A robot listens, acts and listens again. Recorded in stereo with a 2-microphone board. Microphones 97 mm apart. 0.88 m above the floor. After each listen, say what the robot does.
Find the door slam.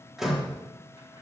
Turn 30° right.
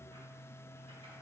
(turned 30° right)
Keep listening.
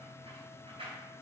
I heard a door slam, but can't make it out now. It was about 25° left or 145° right.